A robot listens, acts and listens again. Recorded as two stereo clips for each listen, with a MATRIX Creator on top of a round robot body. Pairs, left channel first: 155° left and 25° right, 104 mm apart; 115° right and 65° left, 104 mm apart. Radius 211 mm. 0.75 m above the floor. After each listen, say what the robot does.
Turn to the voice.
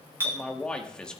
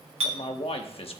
Turn 120° right.
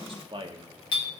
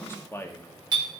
Turn 50° right.
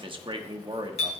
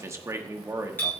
Turn 10° left.
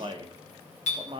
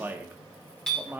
Found it: a man speaking, straight ahead.